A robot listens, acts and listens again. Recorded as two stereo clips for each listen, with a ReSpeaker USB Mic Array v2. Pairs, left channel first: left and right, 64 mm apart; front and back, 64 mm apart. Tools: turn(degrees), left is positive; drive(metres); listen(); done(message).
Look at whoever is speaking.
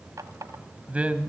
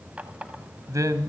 turn(degrees=-155)
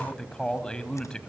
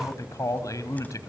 turn(degrees=15)
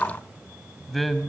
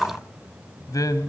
done("Found it: a man speaking, straight ahead, 1 to 2 m away.")